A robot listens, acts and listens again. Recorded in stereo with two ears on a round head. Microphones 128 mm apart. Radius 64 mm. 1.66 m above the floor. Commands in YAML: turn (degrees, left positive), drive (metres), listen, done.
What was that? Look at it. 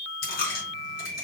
turn: 75
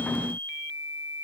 listen: true
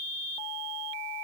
done: "I heard a dropped coin, but can't make it out now. It was about straight ahead or 30° left."